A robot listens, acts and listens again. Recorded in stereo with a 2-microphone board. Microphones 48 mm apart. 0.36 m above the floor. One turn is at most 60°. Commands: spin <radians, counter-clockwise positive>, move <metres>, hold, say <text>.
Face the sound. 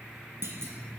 spin -1.05
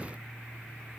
hold
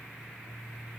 say I heard a clunk, but can't make it out now. It was about 5° right or 55° right.